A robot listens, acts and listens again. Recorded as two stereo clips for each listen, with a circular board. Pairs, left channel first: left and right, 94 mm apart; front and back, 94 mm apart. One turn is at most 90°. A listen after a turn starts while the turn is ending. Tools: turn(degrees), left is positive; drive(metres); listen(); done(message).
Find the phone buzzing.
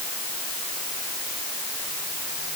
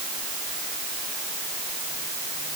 listen()
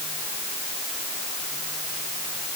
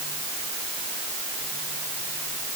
listen()
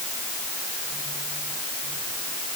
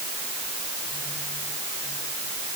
done("I can't make out a phone buzzing to turn to.")